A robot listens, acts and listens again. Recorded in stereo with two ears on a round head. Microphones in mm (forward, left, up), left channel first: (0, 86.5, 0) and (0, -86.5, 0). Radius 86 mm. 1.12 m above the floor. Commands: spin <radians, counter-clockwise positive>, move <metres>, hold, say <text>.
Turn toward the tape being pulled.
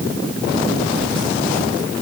hold
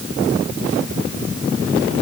hold
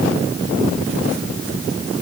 say I can't make out tape being pulled.